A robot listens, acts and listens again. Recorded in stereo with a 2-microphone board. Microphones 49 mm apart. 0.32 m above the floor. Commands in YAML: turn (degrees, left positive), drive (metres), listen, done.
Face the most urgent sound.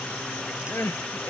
turn: 50
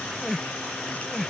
done: "Found it: crying, straight ahead."